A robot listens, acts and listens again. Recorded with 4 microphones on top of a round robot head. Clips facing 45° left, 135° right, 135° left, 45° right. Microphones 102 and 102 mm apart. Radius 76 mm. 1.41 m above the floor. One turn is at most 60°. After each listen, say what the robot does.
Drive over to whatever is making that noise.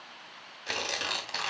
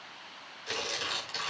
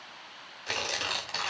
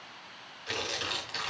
Turn 60° left.
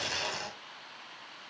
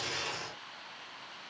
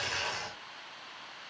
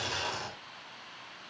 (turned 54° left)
Turn 30° left.
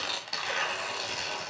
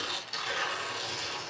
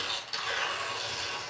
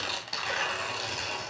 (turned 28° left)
Drive 1.0 m forward.
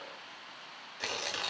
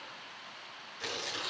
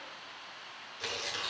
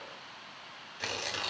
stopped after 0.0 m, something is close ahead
Something is in my way. I am facing the tearing paper but have not reached it.